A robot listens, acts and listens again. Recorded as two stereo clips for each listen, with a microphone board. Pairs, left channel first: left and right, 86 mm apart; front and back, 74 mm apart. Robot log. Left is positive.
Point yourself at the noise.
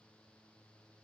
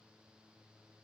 cmd idle
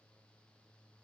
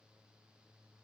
cmd idle
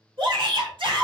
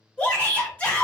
note: The shout: 75° right.
cmd yaw -75
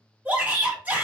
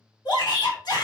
note: The shout is now 20° right.
cmd yaw -20
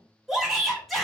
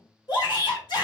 end: Facing the shout, 1 to 2 m away.